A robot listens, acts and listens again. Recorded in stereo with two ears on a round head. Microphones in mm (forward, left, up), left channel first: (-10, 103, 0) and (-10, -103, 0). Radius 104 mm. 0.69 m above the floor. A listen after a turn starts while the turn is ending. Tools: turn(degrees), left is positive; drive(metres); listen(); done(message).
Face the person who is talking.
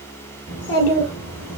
turn(degrees=65)
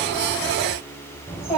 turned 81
done("Found it: a child speaking, straight ahead, 2 to 4 m away.")